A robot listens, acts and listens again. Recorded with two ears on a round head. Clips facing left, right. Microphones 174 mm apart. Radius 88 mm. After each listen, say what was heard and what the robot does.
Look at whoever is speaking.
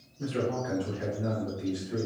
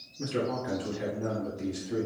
The man speaking: about 50° right or 130° right. Turn 50° right.
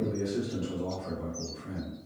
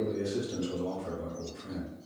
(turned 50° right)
So it is at 10° right. Turn 10° right.
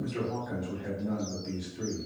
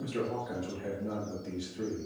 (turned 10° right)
Found it: a man speaking, straight ahead.